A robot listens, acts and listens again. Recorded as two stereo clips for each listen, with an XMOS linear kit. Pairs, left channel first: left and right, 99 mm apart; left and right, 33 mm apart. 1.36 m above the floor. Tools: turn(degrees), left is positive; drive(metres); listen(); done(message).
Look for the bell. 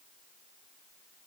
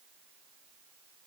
listen()
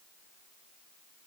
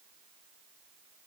listen()
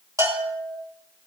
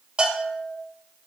turn(degrees=-35)
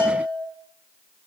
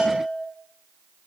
turn(degrees=-110)
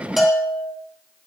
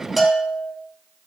done("Found it: a bell, straight ahead.")